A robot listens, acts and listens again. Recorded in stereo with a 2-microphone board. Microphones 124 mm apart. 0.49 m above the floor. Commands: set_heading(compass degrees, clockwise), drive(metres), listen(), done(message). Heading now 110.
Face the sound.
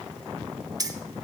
set_heading(140)
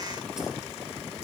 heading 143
listen()
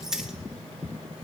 done("Facing the keys jangling, under 1 m away.")